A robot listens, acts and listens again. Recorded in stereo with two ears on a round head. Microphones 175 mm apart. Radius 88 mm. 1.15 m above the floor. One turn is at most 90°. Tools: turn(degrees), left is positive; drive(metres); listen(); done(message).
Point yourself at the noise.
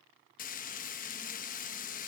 turn(degrees=40)
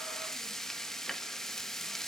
done("Facing the frying, under 1 m away.")